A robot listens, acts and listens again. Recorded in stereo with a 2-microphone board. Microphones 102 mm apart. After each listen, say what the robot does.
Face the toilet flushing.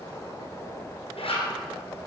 Keep listening.
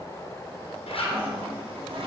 Turn 60° right.
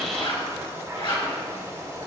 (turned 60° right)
Turn 30° right.
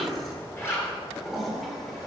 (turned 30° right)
Found it: a toilet flushing, straight ahead, 1 to 2 m away.